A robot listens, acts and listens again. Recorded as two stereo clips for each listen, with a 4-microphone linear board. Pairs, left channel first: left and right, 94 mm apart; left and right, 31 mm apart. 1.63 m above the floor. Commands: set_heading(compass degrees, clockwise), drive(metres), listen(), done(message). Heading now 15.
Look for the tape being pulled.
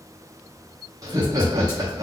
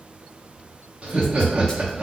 listen()
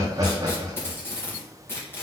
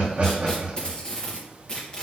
set_heading(350)
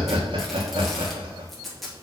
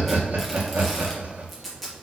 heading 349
done("Facing the tape being pulled.")